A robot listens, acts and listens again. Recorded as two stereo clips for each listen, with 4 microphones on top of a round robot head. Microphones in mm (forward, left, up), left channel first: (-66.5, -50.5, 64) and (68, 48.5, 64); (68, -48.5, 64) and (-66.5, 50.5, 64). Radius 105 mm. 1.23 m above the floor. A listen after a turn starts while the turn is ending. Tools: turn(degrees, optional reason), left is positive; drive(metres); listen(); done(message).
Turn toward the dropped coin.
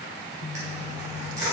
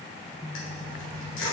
turn(degrees=-35, reason="The dropped coin: 35° right.")
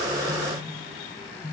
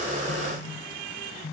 done("I heard a dropped coin from this way, but can't make it out now.")